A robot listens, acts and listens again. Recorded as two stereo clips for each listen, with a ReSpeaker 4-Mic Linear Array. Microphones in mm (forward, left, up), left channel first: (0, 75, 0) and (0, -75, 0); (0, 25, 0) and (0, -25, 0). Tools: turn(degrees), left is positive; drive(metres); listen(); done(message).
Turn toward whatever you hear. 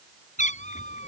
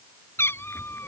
turn(degrees=50)
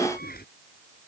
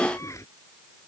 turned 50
turn(degrees=80)
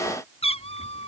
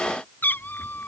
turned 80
turn(degrees=45)
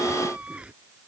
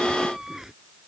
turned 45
done("Found it: a cat meowing, straight ahead.")